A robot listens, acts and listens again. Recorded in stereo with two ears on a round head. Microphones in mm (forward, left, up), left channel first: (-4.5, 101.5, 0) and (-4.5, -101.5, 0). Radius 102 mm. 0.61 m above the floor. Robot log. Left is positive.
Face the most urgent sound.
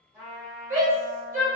note: The shout: about 35° right or 145° right.
cmd yaw -35
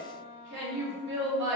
note: So it is at 105° right.
cmd yaw -105
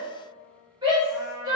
note: The shout is now 25° right.
cmd yaw -25
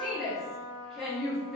end: Found it: a shout, straight ahead, 1 to 2 m away.